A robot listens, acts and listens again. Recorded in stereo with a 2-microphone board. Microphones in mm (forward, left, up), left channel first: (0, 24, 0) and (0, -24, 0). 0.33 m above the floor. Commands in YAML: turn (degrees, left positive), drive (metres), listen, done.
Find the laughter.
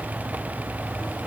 listen: true
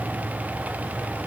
listen: true
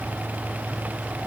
done: "I can't make out laughter."